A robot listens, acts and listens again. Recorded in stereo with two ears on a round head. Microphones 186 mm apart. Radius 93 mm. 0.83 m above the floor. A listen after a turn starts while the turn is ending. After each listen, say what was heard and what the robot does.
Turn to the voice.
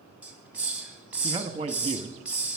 The man speaking: about 25° right or 155° right. Turn 25° right.
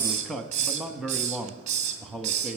Found it: a man speaking, straight ahead, under 1 m away.